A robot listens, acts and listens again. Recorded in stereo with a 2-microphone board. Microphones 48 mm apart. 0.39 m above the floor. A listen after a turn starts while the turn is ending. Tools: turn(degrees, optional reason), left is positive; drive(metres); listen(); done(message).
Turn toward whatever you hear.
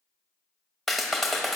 turn(degrees=30)
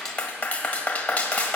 turn(degrees=145, reason="So it is at 145° left.")
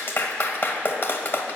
turn(degrees=55, reason="The clap is now 55° left.")
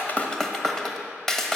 turn(degrees=10, reason="The clap is now 10° left.")
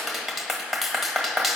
done("Facing the clap.")